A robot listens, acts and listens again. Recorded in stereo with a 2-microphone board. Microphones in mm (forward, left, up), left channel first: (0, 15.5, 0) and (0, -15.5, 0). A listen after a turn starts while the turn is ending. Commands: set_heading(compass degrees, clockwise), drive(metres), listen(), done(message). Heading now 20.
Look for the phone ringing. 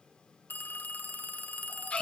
set_heading(310)
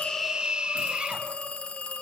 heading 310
set_heading(270)
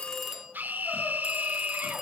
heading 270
set_heading(280)
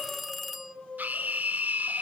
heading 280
done("Found it: a phone ringing, straight ahead, under 1 m away.")